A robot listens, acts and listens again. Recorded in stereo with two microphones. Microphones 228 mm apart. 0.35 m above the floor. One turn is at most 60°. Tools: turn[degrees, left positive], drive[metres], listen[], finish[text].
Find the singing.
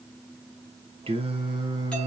Thought: The singing: about 20° right or 160° right.
Action: turn[-20]
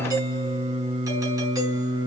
Thought: The singing: about 20° right or 160° right.
Action: turn[-20]
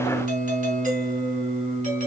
Thought: The singing: about 25° right or 155° right.
Action: turn[-25]
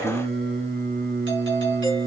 Thought: So it is at 135° right.
Action: turn[-60]
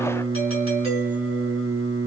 Thought: The singing is now 80° right.
Action: turn[-60]
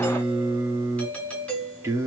Thought: The singing is now 10° right.
Action: turn[-10]
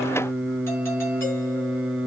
Action: finish[Found it: singing, straight ahead.]